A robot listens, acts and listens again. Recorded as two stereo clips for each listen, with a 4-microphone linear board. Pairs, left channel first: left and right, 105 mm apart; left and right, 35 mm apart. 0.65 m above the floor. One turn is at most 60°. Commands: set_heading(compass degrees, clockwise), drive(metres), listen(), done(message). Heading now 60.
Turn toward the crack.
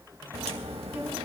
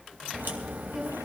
set_heading(120)
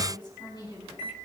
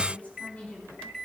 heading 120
listen()
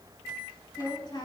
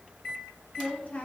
done("I heard a crack, but can't make it out now. It was about 10° right or 50° right.")